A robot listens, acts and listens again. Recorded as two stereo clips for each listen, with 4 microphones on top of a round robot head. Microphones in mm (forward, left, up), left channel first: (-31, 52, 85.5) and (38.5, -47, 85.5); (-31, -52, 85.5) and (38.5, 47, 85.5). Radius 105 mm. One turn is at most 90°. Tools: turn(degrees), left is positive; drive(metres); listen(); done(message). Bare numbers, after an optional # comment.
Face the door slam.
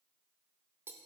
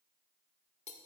listen()
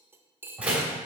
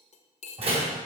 # The door slam: 25° left.
turn(25)
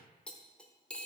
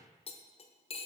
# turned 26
done("I heard a door slam from this way, but can't make it out now.")